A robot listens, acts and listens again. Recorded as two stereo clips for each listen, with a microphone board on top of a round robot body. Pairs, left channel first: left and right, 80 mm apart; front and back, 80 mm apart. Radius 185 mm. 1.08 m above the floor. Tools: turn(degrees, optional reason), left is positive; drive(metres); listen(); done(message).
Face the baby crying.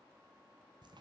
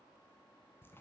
listen()
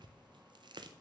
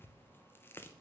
listen()
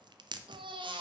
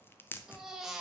turn(degrees=-95, reason="The baby crying: 95° right.")
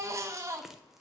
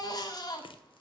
turn(degrees=-35, reason="The baby crying is now 35° right.")
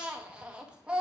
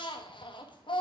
turn(degrees=-10, reason="The baby crying is now 10° right.")
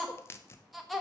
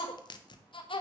done("Facing the baby crying, 1 to 2 m away.")